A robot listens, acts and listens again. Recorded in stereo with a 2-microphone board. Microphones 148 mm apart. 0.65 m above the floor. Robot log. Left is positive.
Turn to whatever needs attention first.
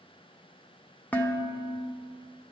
cmd idle
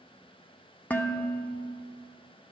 cmd idle
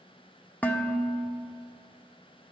end: I can't make out anything urgent, only dishes clattering.